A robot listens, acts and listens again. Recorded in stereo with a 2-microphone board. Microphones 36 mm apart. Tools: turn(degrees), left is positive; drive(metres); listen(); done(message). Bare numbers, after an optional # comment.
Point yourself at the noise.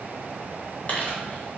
# The crumpling: about 40° left or 140° left.
turn(40)
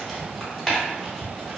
done("Found it: crumpling, straight ahead, 1 to 2 m away.")